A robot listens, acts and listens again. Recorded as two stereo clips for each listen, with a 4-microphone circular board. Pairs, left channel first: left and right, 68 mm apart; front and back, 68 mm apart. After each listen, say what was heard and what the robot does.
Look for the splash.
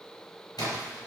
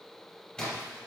The splash: 75° left. Turn 75° left.
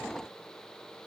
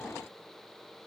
I heard a splash from this way, but can't make it out now.